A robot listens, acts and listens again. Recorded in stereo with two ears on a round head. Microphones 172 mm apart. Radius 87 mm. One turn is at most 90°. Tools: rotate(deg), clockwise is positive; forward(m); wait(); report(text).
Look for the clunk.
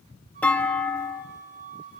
rotate(-30)
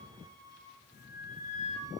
wait()
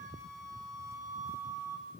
report("I heard a clunk, but can't make it out now. It was about 20° right or 140° left.")